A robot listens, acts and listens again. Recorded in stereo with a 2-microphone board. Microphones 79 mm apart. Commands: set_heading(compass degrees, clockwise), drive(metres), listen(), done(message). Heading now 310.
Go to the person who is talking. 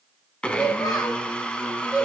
set_heading(255)
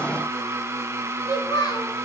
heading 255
set_heading(185)
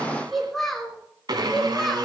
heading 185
drive(1.0)
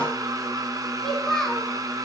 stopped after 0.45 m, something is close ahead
done("Blocked. The child speaking is further on, straight ahead.")